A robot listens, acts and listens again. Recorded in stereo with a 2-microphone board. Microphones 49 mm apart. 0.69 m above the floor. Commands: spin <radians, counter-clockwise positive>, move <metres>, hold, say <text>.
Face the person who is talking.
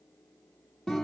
hold
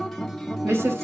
spin -1.22
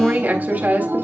spin -0.61
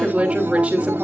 spin -0.44
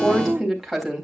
say Found it: a woman speaking, straight ahead, 2 to 4 m away.